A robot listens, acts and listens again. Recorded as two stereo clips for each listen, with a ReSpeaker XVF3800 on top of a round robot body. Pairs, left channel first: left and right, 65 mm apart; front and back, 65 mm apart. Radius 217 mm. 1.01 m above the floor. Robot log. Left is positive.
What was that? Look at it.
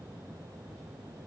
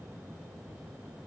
cmd idle
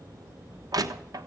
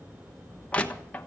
note: The crushing: 70° right.
cmd yaw -70
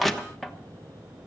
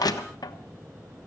end: Found it: crushing, straight ahead, 1 to 2 m away.